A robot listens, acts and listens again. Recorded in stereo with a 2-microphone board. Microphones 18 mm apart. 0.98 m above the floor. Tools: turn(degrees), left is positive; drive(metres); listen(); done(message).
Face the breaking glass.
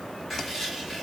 listen()
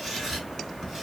listen()
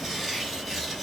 done("I can't make out breaking glass to turn to.")